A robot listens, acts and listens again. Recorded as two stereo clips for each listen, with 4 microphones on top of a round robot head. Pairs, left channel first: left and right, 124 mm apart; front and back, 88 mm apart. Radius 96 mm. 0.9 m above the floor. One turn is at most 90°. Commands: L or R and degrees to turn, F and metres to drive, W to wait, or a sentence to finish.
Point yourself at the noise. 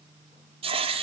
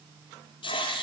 R45
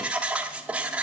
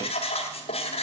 R10
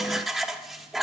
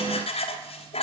Facing the writing.